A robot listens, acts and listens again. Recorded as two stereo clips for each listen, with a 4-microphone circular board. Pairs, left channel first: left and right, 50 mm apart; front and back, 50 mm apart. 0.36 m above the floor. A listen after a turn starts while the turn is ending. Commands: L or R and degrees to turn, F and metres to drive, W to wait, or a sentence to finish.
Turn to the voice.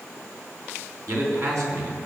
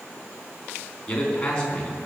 R70
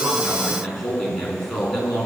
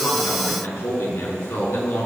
Facing the man speaking, over 4 m away.